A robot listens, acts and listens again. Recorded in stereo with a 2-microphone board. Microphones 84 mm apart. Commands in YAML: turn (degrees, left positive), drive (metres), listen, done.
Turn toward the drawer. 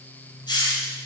listen: true
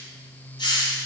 listen: true
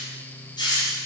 done: "I can't make out a drawer, only a hiss."